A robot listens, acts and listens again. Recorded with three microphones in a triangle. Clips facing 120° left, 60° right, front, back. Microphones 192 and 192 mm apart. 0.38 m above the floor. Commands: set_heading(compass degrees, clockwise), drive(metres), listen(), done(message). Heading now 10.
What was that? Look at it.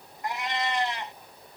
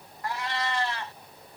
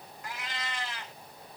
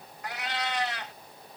set_heading(180)
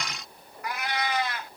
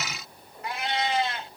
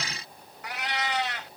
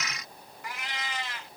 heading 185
done("Facing the cat meowing.")